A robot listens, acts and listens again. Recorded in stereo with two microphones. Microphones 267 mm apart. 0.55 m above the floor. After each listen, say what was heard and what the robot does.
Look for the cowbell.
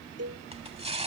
The cowbell: about 65° right or 115° right. Turn 65° right.
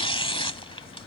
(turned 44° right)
Keep listening.
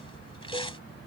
Keep listening.
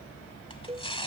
So it is at 20° right. Turn 20° right.
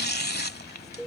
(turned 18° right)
Found it: a cowbell, straight ahead.